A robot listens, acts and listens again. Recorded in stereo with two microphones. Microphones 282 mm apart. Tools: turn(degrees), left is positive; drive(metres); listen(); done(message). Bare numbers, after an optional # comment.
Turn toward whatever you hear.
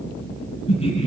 # The laughter: about 20° left or 160° left.
turn(20)
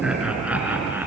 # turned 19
# So it is at 10° right.
turn(-10)
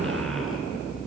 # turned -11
listen()
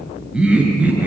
done("Facing the laughter.")